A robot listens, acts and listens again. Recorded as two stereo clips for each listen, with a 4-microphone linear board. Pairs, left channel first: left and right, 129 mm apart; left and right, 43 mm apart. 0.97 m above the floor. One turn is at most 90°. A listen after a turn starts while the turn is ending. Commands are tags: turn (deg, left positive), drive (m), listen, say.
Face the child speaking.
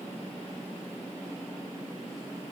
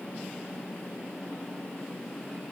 <listen/>
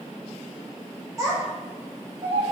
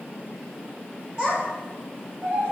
<turn deg="-40"/>
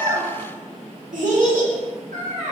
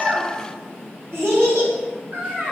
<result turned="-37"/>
<turn deg="-90"/>
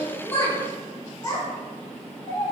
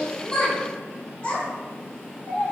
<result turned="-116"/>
<turn deg="35"/>
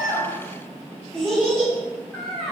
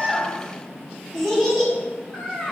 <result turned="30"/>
<say>Facing the child speaking.</say>